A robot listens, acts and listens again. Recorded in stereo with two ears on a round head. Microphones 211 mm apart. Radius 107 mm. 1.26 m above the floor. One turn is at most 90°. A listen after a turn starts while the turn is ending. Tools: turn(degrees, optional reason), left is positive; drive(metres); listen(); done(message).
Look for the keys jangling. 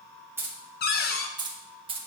turn(degrees=-25, reason="The keys jangling: about 25° right or 155° right.")
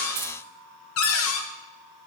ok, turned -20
listen()
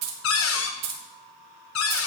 turn(degrees=-90, reason="So it is at 105° right.")
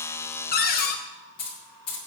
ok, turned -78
turn(degrees=20, reason="The keys jangling is now 20° left.")
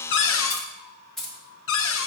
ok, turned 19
done("Found it: keys jangling, straight ahead, 1 to 2 m away.")